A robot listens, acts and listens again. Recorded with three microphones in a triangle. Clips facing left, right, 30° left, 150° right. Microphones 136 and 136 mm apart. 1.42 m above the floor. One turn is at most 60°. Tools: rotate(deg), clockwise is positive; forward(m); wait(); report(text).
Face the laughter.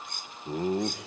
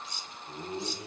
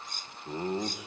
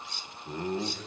rotate(-60)
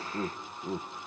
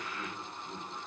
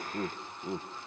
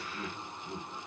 rotate(-60)
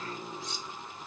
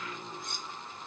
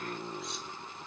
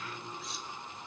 rotate(-20)
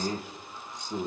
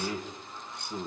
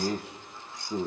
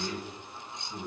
rotate(-15)
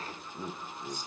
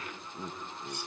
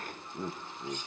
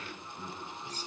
report("Found it: laughter, straight ahead, 2 to 4 m away.")